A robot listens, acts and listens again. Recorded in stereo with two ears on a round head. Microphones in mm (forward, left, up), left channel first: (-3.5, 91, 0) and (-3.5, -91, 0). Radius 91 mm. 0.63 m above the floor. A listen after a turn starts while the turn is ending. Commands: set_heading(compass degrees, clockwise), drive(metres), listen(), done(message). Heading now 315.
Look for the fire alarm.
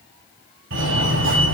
set_heading(25)
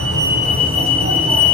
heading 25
set_heading(55)
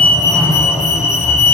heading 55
set_heading(40)
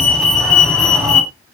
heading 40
done("Facing the fire alarm.")